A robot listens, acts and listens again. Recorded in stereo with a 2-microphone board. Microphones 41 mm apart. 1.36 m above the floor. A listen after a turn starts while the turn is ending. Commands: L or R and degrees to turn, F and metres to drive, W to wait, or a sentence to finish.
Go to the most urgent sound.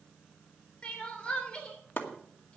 L25
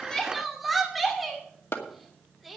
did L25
F1.0
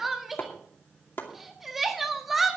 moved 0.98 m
F1.0
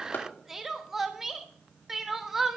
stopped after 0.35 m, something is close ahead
R10
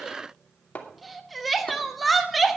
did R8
Arrived at the crying, straight ahead.